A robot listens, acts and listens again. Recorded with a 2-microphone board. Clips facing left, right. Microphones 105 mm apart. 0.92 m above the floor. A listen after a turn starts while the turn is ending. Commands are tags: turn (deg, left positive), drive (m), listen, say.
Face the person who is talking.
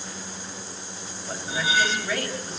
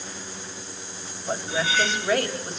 <turn deg="-70"/>
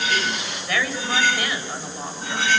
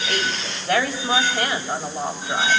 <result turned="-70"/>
<turn deg="-40"/>
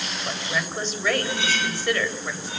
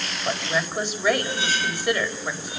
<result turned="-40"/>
<turn deg="-15"/>
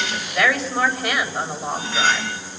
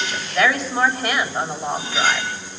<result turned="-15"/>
<say>Facing the woman speaking.</say>